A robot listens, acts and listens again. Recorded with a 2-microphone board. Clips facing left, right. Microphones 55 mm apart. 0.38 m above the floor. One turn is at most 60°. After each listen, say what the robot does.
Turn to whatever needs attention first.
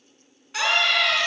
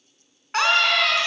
Turn 50° right.
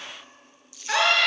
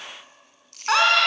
Turn 60° right.
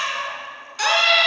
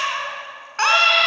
Turn 50° right.
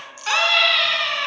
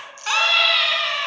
Facing the scream.